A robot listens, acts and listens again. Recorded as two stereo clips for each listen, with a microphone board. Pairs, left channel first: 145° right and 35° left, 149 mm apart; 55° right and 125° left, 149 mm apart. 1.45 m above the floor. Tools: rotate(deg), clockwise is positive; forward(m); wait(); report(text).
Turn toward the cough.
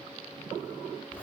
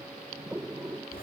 wait()
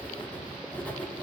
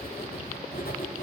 wait()
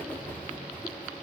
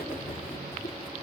report("I can't make out a cough to turn to.")